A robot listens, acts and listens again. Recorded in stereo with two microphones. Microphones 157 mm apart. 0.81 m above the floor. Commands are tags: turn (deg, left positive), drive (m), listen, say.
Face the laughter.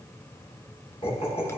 <turn deg="40"/>
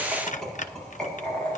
<say>Found it: laughter, straight ahead.</say>